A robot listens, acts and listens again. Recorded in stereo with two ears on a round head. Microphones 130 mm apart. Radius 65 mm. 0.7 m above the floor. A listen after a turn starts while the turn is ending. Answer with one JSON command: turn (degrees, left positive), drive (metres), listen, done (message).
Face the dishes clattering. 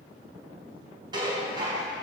{"turn": -30}
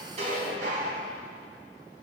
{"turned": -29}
{"turn": -120}
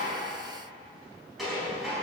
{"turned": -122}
{"done": "Facing the dishes clattering, over 4 m away."}